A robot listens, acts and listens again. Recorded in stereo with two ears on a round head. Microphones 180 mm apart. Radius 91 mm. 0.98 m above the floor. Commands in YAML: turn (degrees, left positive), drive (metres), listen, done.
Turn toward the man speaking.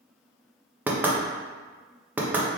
listen: true
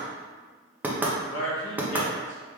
turn: 70
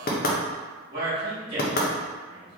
turn: -25
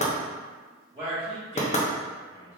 turn: -15
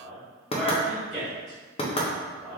done: "Found it: a man speaking, straight ahead, 1 to 2 m away."